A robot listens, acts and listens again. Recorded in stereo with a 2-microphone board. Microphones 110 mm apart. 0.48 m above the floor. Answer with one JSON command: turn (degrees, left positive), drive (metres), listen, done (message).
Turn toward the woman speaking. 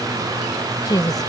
{"turn": 35}
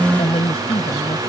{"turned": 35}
{"turn": 120}
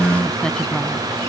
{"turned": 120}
{"listen": true}
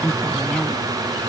{"turn": 10}
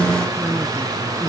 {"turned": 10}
{"done": "Facing the woman speaking."}